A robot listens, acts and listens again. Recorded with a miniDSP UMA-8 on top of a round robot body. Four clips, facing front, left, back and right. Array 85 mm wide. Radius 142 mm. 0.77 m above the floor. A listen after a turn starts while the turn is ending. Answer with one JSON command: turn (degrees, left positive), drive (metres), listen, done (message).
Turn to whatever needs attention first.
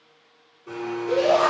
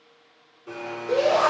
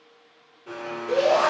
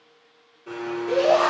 {"turn": -70}
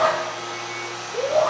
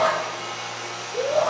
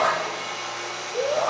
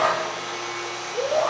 {"done": "Facing the shout."}